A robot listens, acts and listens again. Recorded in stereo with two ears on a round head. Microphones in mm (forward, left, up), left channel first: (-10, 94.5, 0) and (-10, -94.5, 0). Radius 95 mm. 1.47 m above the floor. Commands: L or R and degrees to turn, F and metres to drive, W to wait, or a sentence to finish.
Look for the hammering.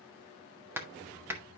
R30
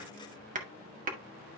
R135
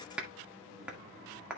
Facing the hammering.